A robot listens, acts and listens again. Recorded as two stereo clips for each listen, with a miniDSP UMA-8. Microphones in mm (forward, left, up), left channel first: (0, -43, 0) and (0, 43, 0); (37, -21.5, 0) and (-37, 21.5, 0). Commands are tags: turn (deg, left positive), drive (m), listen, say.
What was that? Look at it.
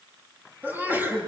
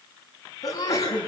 <turn deg="20"/>
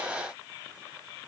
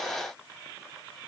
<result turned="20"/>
<say>Facing where the sneeze came from. I can't hear it now.</say>